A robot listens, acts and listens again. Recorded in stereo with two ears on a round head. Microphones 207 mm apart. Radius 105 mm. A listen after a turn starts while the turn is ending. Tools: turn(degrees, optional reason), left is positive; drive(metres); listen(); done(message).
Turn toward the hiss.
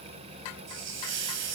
turn(degrees=-50, reason="The hiss: about 50° right or 130° right.")
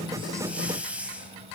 done("Found it: a hiss, straight ahead, 2 to 4 m away.")